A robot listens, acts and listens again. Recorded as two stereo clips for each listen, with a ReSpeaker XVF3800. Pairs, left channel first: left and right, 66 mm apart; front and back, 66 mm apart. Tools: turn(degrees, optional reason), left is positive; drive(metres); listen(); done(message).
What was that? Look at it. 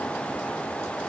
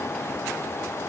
listen()
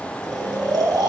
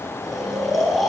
turn(degrees=-90, reason="The snoring: 90° right.")
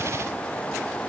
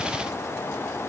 listen()
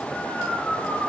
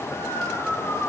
turn(degrees=-20, reason="The snoring is now 20° right.")
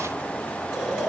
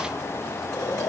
listen()
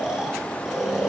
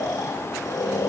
done("Facing the snoring, 2 to 4 m away.")